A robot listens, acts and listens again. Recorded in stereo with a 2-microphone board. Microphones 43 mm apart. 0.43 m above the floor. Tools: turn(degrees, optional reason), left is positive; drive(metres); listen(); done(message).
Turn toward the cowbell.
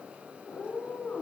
listen()
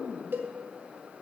turn(degrees=-55, reason="The cowbell: about 55° right or 125° right.")
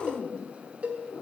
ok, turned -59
turn(degrees=-45, reason="So it is at 45° right.")
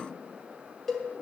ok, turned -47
done("Facing the cowbell, 1 to 2 m away.")